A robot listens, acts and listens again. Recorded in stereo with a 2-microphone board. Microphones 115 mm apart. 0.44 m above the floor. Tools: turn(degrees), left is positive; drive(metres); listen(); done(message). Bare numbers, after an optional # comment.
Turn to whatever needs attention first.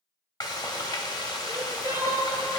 # The crying: about 25° right or 155° right.
turn(-25)
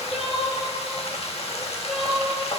done("Facing the crying.")